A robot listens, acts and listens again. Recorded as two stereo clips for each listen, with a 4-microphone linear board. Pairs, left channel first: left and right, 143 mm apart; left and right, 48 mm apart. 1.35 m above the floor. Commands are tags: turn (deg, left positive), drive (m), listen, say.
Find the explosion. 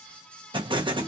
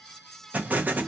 <turn deg="-35"/>
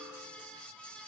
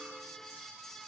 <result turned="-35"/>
<listen/>
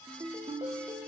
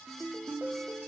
<say>I heard an explosion, but can't make it out now. It was about straight ahead or 110° right.</say>